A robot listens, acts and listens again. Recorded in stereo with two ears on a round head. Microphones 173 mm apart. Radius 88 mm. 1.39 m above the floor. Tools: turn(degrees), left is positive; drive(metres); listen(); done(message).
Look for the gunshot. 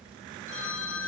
listen()
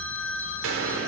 turn(degrees=-90)
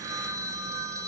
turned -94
done("I heard a gunshot from this way, but can't make it out now.")